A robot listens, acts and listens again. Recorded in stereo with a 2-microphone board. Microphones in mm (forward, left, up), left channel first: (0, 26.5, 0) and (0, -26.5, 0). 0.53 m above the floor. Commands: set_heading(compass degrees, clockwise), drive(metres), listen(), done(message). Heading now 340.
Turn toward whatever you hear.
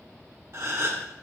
set_heading(40)
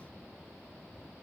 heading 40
listen()
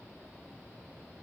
done("I heard a gasp, but can't make it out now. It was about straight ahead or 60° right.")